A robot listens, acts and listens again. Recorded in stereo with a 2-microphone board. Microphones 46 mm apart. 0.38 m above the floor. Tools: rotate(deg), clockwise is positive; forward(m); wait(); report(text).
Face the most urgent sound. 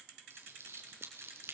wait()
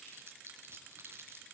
wait()
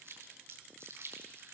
report("I can't make out anything urgent to turn to.")